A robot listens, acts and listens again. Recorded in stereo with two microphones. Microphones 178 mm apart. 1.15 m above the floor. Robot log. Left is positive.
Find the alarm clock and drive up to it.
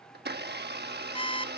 note: The alarm clock: about 30° left or 150° left.
cmd yaw +30
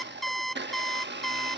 cmd fwd 1.0
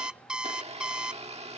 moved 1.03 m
cmd fwd 1.0
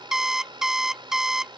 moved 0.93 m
cmd fwd 1.0
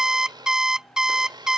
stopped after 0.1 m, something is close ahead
end: Arrived at the alarm clock, straight ahead.